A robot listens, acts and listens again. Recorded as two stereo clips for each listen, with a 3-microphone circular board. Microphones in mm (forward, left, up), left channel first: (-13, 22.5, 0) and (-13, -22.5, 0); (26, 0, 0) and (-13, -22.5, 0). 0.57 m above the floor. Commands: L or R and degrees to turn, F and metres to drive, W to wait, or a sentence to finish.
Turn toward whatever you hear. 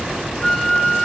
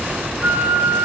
L160
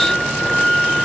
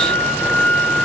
Found it: a flute, straight ahead.